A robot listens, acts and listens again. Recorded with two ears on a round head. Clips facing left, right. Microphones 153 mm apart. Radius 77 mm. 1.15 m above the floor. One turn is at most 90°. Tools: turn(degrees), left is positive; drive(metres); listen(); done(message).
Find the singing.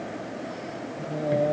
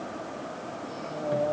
turn(degrees=30)
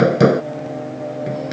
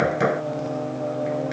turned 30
done("Found it: singing, straight ahead.")